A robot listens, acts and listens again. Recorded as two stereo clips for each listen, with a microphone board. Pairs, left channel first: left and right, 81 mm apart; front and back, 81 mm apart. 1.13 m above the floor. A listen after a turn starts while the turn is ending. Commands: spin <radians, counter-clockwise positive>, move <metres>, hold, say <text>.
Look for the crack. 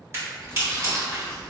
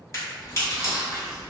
spin -0.70
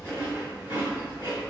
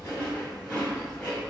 say Facing where the crack came from. I can't hear it now.